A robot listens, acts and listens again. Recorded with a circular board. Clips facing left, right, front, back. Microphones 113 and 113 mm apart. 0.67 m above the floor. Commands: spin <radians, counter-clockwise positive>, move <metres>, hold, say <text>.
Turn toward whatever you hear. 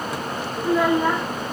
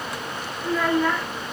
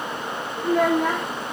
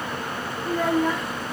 spin 0.44
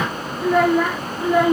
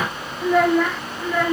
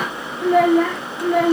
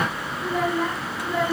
spin 0.35
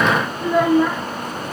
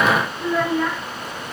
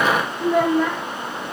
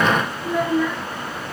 spin 0.35
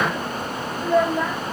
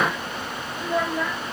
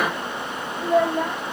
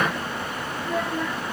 spin 0.26
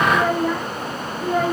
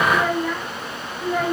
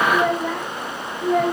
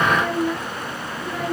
spin 0.17
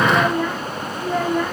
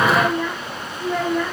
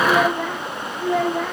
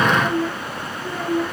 say Facing the child speaking, 2 to 4 m away.